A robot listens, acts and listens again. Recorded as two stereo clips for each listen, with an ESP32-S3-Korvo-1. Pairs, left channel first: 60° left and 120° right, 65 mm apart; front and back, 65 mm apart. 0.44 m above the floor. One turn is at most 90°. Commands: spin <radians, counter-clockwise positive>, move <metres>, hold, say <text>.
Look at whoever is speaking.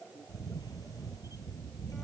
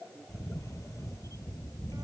hold
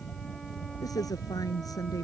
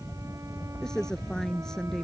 spin 1.40
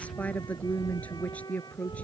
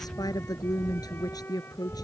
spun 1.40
spin -0.17
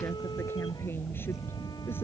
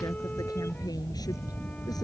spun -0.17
hold
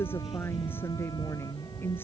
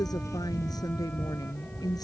say Facing the woman speaking.